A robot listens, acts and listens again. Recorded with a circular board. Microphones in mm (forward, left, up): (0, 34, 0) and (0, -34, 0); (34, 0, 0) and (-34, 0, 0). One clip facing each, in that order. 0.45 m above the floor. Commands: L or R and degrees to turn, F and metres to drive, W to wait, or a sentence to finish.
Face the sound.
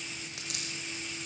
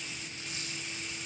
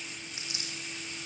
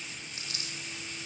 L70
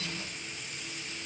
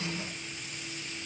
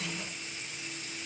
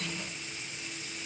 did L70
Facing where the dropped coin came from. I can't hear it now.